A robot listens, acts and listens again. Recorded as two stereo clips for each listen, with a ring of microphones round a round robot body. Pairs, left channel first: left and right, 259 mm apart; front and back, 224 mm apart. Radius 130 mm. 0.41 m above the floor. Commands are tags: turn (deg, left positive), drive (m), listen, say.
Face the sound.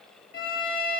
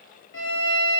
<turn deg="30"/>
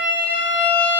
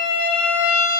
<say>Found it: a violin, straight ahead, over 4 m away.</say>